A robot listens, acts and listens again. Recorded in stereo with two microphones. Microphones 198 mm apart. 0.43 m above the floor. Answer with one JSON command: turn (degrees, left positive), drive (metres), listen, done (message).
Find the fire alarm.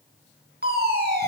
{"turn": -55}
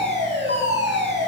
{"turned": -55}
{"turn": -70}
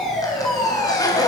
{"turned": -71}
{"done": "Found it: a fire alarm, straight ahead."}